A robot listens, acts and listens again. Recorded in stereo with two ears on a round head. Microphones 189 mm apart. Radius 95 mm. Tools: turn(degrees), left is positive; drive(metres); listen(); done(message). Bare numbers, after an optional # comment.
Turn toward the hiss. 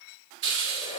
# The hiss: about 65° right or 115° right.
turn(-65)
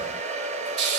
# So it is at 50° right.
turn(-50)
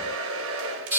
done("Found it: a hiss, straight ahead, over 4 m away.")